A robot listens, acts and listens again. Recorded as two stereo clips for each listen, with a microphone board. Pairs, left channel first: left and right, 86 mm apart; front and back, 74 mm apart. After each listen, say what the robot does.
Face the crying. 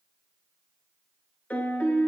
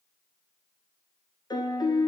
Keep listening.
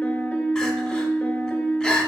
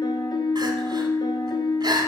Turn 170° left.
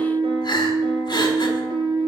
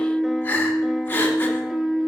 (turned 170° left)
Turn 65° left.
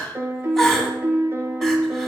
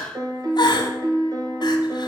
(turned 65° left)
Facing the crying.